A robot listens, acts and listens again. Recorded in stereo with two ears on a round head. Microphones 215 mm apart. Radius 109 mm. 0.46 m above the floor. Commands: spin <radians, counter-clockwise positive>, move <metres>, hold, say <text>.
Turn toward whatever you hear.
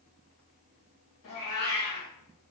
spin 1.13
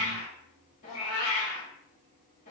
spin 0.61
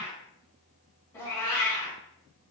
spin 0.17
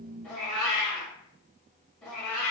say Found it: a cat meowing, straight ahead.